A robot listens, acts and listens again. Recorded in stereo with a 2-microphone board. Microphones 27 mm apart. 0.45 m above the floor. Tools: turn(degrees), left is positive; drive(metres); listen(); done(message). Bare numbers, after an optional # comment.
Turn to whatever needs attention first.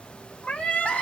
# The crying: about 55° left or 125° left.
turn(55)
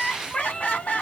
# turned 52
# So it is at 70° left.
turn(70)
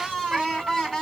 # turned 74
done("Found it: crying, straight ahead.")